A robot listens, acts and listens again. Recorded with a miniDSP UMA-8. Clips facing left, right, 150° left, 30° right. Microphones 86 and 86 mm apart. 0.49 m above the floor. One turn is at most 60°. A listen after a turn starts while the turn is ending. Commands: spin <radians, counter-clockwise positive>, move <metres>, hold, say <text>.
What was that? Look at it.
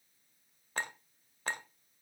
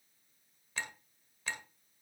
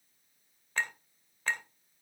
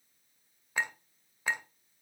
spin 0.87
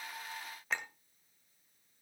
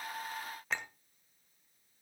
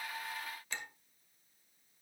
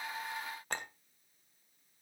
say Found it: a clink, straight ahead.